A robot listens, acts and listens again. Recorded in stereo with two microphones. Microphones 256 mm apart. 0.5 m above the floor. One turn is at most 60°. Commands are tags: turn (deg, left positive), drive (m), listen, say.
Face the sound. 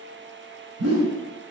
<turn deg="-60"/>
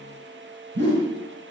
<turn deg="-45"/>
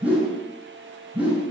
<say>Found it: a whoosh, straight ahead, over 4 m away.</say>